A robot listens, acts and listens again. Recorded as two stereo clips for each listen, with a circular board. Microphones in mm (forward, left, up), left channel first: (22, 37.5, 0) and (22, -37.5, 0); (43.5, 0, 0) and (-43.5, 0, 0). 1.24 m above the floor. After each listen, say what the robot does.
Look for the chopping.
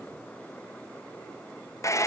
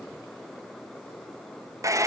Keep listening.
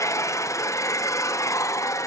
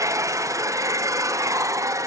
Keep listening.
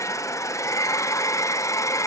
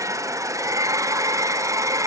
I can't make out chopping, only a hair dryer.